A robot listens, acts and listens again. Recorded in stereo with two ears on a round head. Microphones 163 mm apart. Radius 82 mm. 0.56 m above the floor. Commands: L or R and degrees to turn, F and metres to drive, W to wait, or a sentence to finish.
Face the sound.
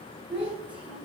R25
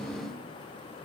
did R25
W
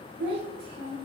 R115
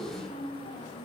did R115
L55
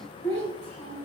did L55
L10
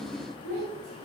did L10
Facing the child speaking.